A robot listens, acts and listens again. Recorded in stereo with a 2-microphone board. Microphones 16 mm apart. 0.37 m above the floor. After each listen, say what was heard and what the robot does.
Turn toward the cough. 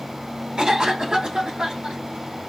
The cough: about 65° right or 115° right. Turn 65° right.
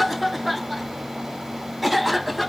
Facing the cough, 2 to 4 m away.